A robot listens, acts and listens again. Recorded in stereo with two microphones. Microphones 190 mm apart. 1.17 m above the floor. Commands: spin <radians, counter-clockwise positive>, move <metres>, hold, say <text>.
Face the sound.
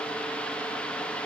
hold
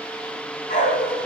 spin 0.79
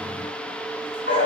spin 1.75
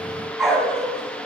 say Found it: a dog barking, straight ahead, 2 to 4 m away.